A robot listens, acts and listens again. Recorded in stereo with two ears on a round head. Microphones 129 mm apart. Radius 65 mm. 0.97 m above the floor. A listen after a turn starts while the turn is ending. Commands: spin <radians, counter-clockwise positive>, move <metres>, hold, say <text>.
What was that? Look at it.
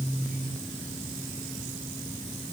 hold
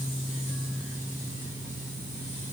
hold
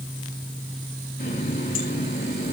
spin 1.13
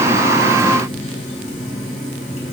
spin 0.87
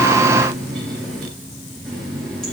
say Found it: a running tap, straight ahead.